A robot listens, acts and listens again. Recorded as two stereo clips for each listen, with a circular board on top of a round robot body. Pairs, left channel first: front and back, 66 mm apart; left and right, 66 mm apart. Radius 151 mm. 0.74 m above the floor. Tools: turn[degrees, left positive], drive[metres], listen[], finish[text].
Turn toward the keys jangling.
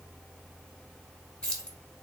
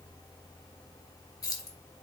Thought: The keys jangling: 80° left.
Action: turn[80]
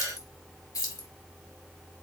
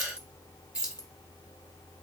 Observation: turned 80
Thought: The keys jangling is now 15° right.
Action: turn[-15]
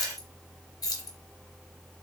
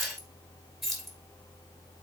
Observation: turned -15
Action: finish[Facing the keys jangling, 1 to 2 m away.]